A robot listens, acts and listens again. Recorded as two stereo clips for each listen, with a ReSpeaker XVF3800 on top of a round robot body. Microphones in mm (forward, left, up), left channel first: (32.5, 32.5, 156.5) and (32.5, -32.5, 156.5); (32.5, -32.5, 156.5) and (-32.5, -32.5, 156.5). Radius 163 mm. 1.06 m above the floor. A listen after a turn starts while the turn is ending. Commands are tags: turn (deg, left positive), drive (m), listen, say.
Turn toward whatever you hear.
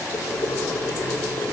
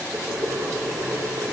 <turn deg="120"/>
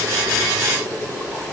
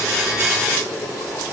<turn deg="20"/>
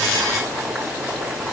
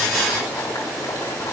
<say>Facing the boiling.</say>